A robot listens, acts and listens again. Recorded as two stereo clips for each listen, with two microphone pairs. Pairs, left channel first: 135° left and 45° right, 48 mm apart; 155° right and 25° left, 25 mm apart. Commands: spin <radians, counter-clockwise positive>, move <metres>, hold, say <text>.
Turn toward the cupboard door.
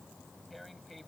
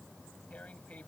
hold
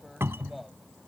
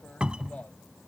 spin -0.35
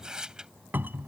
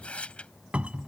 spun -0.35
say Facing the cupboard door.